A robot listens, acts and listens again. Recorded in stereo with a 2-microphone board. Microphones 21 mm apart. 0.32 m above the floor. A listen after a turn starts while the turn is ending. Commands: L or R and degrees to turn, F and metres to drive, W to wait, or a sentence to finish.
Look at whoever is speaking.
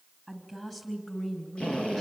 L15
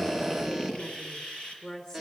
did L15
L40
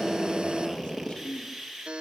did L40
L105
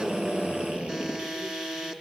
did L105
W
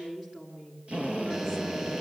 R25
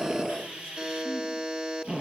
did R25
W
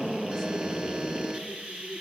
W
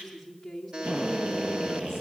Facing the woman speaking, over 4 m away.